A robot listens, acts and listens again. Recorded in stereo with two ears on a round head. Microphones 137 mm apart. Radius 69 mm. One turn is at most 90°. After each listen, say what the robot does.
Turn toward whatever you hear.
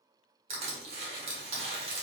Turn 40° right.
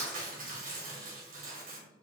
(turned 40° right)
Turn 90° right.
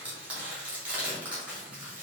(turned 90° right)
Turn 10° right.
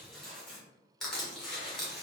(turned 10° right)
Found it: crushing, straight ahead, 1 to 2 m away.